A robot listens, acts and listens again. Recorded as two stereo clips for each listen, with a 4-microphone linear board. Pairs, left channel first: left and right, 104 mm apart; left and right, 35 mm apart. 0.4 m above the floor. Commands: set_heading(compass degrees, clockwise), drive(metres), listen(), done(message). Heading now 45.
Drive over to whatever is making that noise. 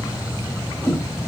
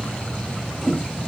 set_heading(20)
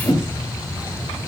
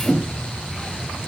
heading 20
set_heading(255)
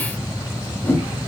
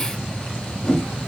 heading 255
set_heading(235)
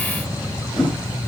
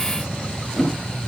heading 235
drive(1.0)
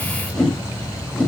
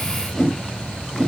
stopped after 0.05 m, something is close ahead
done("Blocked. The whoosh is further on, straight ahead.")